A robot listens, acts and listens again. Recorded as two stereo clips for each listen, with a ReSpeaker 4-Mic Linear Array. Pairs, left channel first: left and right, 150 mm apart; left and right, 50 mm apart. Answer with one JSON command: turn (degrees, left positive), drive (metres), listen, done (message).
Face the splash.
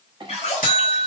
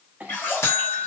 {"turn": 45}
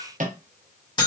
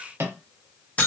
{"listen": true}
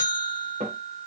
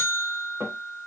{"done": "I heard a splash, but can't make it out now. It was about straight ahead or 90° left."}